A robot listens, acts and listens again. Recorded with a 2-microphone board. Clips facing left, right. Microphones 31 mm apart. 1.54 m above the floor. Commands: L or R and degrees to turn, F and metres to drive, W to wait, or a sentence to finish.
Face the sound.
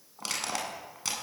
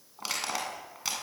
R30
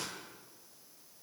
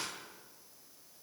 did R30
W
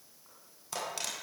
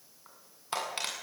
R145
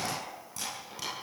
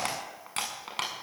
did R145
R55
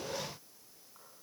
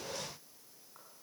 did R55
W
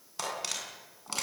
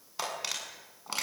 R10
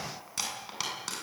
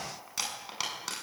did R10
Found it: crushing, straight ahead.